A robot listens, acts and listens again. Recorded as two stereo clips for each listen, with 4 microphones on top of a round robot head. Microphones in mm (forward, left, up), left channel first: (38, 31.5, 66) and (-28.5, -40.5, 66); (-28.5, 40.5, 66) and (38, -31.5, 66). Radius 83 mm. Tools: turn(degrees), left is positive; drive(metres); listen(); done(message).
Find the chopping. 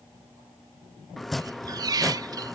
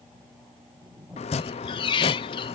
turn(degrees=135)
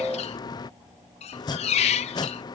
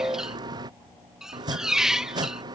done("Facing the chopping.")